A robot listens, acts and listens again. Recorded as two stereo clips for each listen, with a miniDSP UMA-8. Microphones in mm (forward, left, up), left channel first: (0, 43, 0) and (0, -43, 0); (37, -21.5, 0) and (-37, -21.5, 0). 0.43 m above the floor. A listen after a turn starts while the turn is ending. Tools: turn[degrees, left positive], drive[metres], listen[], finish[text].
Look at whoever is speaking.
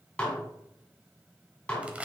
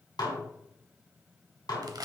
Action: listen[]
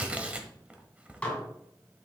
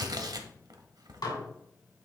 Action: listen[]
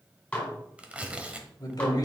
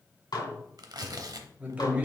Thought: The man speaking: 115° left.
Action: turn[115]
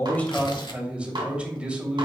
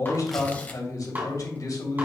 Thought: The man speaking is now 15° right.
Action: turn[-15]
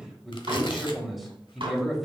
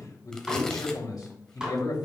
Action: finish[Found it: a man speaking, straight ahead.]